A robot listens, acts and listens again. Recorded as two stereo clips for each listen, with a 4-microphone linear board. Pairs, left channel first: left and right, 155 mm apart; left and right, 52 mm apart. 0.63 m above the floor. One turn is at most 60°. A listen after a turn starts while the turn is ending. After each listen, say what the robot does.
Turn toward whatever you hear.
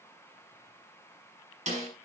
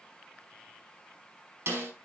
Turn 50° right.
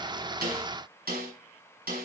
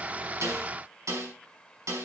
Turn 60° right.
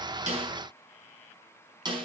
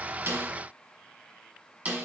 Turn 30° right.
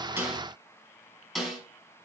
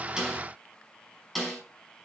Facing the snare drum.